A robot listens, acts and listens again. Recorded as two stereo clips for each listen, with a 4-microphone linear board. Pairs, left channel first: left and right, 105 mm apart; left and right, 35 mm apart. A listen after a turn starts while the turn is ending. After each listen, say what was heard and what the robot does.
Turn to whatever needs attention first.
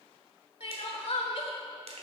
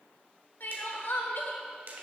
The crying: about 65° left or 115° left. Turn 65° left.
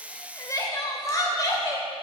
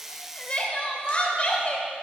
So it is at 35° left. Turn 35° left.
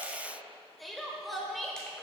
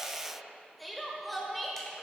Facing the crying.